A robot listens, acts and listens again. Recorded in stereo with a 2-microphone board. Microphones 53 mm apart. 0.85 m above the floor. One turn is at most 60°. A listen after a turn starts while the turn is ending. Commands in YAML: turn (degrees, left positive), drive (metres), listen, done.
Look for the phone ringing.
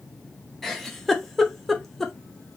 listen: true
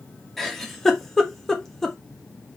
listen: true
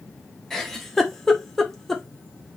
done: "I can't make out a phone ringing, only a giggle."